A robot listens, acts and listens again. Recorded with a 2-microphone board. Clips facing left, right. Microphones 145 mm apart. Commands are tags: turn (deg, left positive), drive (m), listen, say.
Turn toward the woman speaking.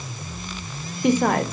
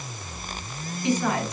<turn deg="60"/>
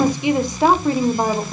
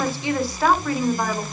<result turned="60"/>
<turn deg="30"/>
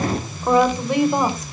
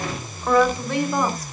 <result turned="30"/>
<turn deg="20"/>
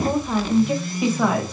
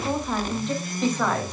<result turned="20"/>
<turn deg="10"/>
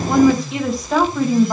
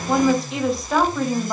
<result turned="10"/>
<say>Facing the woman speaking.</say>